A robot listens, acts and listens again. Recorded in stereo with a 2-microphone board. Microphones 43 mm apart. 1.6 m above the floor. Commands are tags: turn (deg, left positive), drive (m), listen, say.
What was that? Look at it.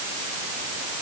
<listen/>
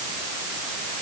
<listen/>
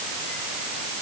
<say>I can't make out anything to turn to.</say>